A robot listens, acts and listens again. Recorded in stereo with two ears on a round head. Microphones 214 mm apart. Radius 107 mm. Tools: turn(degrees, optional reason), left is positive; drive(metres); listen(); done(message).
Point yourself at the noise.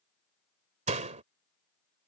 turn(degrees=-30, reason="The door slam: about 30° right or 150° right.")
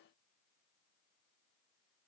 listen()
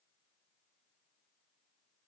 done("I heard a door slam, but can't make it out now. It was about straight ahead or 120° right.")